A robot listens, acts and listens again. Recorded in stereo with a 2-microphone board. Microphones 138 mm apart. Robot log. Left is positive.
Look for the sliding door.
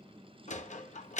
note: The sliding door: about 60° left or 120° left.
cmd yaw +60
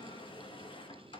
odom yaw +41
cmd idle
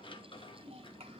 note: So it is at 45° left.
cmd yaw +45
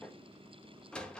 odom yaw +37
note: The sliding door is now 10° left.
cmd yaw +10
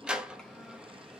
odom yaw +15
end: Facing the sliding door, under 1 m away.